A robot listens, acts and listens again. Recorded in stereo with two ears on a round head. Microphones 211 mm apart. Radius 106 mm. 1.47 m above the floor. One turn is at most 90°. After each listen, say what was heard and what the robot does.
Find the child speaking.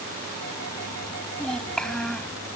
Turn 30° left.
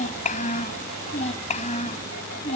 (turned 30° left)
So it is at 150° left. Turn 90° left.
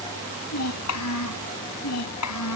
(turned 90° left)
The child speaking is now 80° left. Turn 80° left.
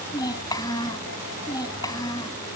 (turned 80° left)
The child speaking is now 15° left. Turn 15° left.
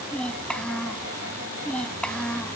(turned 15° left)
Facing the child speaking.